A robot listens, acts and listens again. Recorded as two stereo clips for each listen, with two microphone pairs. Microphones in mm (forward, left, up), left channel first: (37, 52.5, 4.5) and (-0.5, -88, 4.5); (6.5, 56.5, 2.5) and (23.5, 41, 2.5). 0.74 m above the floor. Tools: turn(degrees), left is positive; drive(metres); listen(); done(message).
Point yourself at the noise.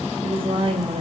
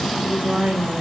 turn(degrees=-55)
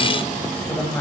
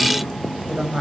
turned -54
done("Facing the woman speaking.")